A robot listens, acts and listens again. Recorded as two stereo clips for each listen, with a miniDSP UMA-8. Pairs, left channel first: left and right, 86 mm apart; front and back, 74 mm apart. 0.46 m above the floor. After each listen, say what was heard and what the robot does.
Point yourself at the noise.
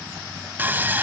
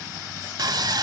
The sawing: 155° right. Turn 155° right.
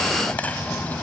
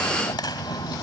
The sawing is now 20° left. Turn 20° left.
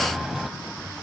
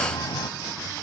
Found it: sawing, straight ahead, 1 to 2 m away.